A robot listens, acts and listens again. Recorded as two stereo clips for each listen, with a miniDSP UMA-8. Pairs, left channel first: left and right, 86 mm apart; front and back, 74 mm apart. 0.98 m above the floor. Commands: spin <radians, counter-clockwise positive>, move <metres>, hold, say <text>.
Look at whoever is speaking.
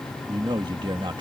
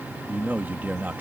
spin -2.01
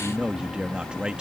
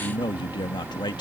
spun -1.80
spin -0.17
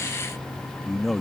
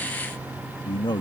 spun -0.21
say Facing the man speaking.